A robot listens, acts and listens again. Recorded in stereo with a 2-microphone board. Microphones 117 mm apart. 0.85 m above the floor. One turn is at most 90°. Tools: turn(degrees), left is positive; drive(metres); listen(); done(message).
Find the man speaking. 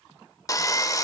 listen()
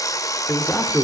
turn(degrees=30)
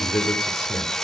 turn(degrees=90)
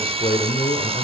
turn(degrees=75)
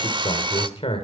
turn(degrees=55)
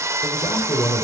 turn(degrees=40)
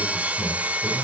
listen()
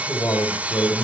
turn(degrees=25)
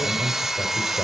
turn(degrees=15)
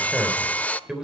done("Facing the man speaking.")